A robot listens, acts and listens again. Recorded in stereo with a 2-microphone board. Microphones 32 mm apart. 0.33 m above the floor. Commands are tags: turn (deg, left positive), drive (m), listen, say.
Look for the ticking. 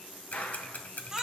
<turn deg="50"/>
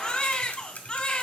<turn deg="60"/>
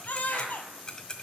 <turn deg="30"/>
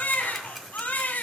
<listen/>
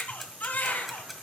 <say>Facing the ticking, 1 to 2 m away.</say>